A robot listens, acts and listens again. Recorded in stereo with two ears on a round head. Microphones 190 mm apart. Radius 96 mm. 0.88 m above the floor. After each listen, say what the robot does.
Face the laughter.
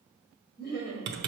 Turn 40° left.
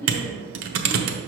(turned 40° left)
Keep listening.
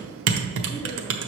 Keep listening.
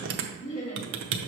Turn 35° left.
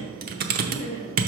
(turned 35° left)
Turn 40° left.
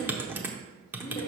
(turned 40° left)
Turn 20° left.
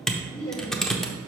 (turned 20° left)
Turn 10° left.
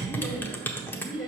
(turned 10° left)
Found it: laughter, straight ahead, 1 to 2 m away.